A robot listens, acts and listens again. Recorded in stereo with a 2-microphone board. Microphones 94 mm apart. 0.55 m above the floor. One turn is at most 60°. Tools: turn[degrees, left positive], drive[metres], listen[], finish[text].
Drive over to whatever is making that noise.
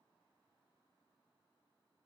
Action: listen[]
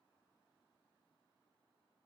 Action: listen[]
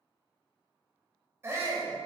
Thought: The shout: about 25° right or 155° right.
Action: turn[-25]
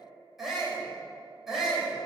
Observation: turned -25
Action: drive[1.0]
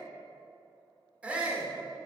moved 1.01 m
Thought: The shout is now 15° right.
Action: turn[-15]
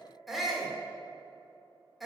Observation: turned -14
Action: drive[1.0]
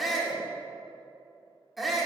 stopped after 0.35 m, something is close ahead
Action: finish[I am next to the shout.]